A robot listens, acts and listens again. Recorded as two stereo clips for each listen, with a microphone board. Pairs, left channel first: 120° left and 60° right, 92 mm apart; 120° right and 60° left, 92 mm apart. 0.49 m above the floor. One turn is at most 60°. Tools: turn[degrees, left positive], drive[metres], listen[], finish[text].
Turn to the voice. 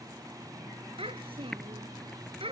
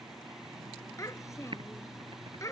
Thought: The child speaking: 65° right.
Action: turn[-60]
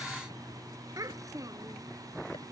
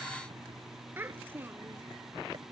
Action: finish[Found it: a child speaking, straight ahead.]